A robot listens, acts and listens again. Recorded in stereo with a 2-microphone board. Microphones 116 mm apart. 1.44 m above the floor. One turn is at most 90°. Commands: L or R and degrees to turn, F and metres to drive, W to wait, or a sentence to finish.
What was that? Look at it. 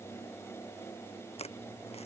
L65
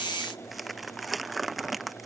Facing the crumpling.